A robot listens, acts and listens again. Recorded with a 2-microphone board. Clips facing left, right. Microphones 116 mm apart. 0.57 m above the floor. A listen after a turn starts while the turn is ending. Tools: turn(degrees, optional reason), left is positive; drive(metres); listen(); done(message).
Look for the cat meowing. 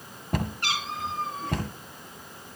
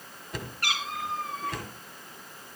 turn(degrees=25, reason="The cat meowing: about 25° left or 155° left.")
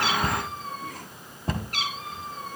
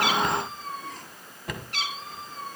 turn(degrees=130, reason="So it is at 130° left.")
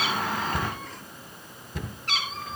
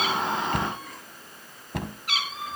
turn(degrees=-10, reason="The cat meowing is now 10° right.")
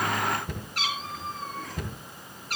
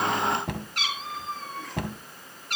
done("Facing the cat meowing.")